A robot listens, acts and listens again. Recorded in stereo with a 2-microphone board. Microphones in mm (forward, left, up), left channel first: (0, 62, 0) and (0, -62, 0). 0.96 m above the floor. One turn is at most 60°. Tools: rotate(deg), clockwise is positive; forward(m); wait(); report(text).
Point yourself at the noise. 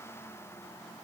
wait()
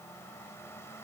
wait()
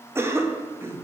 rotate(20)
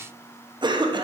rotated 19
rotate(60)
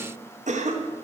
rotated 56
rotate(60)
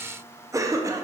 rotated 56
rotate(25)
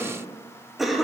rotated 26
report("Facing the cough, 1 to 2 m away.")